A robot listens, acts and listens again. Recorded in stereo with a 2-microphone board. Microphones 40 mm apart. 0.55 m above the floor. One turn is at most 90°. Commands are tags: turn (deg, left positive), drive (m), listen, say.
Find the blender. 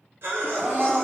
<turn deg="-15"/>
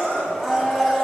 <say>Found it: a blender, straight ahead, 1 to 2 m away.</say>